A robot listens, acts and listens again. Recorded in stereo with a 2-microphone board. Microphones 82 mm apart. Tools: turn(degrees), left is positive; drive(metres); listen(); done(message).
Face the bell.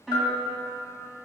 turn(degrees=55)
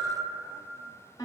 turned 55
listen()
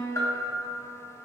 turn(degrees=50)
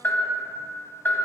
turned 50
turn(degrees=25)
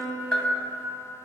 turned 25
done("Found it: a bell, straight ahead.")